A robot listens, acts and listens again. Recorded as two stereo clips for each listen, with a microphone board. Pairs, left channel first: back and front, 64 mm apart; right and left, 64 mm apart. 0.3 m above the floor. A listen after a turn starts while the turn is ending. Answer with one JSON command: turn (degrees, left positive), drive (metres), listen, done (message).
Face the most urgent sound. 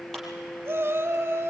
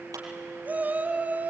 {"turn": 35}
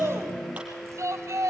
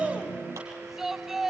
{"turn": 10}
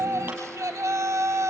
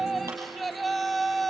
{"done": "Found it: a shout, straight ahead, 1 to 2 m away."}